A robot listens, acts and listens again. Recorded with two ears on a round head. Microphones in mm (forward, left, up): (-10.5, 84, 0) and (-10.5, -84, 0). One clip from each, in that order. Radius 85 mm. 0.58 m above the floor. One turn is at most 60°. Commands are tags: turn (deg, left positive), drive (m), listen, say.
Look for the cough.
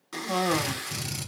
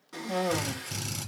<turn deg="50"/>
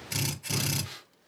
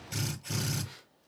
<turn deg="60"/>
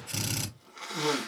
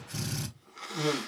<say>Found it: a cough, straight ahead, 1 to 2 m away.</say>